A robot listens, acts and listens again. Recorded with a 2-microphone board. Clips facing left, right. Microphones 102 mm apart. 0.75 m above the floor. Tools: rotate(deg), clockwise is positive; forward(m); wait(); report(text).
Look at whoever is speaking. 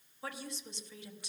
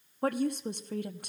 rotate(55)
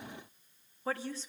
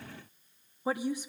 rotate(15)
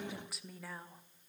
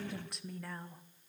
report("Facing the woman speaking.")